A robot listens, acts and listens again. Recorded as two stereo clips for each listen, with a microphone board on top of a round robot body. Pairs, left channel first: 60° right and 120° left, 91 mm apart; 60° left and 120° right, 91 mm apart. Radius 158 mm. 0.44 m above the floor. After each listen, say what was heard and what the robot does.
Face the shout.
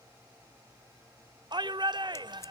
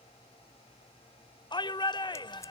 The shout: 90° left. Turn 90° left.
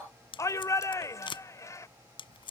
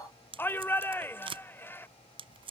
Facing the shout.